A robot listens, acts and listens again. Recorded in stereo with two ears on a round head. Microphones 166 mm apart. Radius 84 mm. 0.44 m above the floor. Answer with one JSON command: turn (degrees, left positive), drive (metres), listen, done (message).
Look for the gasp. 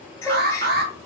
{"turn": 20}
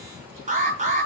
{"listen": true}
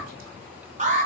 {"done": "I heard a gasp, but can't make it out now. It was about straight ahead or 140° left."}